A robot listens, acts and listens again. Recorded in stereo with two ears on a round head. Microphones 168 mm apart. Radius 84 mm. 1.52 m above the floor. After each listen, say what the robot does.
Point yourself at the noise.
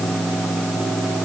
Keep listening.
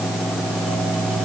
Keep listening.
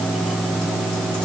I can't make out anything.